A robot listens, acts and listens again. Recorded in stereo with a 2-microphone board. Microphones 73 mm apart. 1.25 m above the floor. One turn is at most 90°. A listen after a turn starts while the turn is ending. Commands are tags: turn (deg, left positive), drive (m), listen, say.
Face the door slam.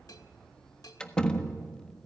<turn deg="30"/>
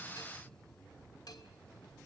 <listen/>
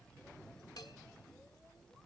<say>I heard a door slam, but can't make it out now. It was about 20° right or 140° left.</say>